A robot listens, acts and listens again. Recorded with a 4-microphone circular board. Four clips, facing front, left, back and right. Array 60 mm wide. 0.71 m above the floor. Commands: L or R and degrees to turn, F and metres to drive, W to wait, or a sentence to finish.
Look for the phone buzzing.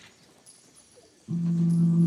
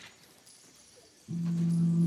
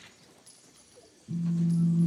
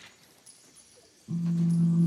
R30
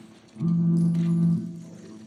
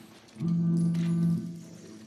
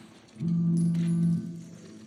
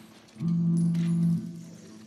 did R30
Found it: a phone buzzing, straight ahead, 1 to 2 m away.